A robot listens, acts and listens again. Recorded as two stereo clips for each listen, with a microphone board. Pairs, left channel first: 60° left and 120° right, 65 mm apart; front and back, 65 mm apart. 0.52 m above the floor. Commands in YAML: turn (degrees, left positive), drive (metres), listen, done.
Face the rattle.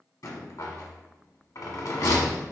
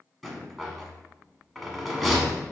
turn: 90
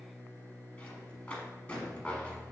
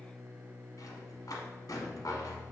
turn: -10
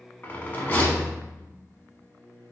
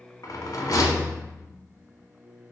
done: "Found it: a rattle, straight ahead."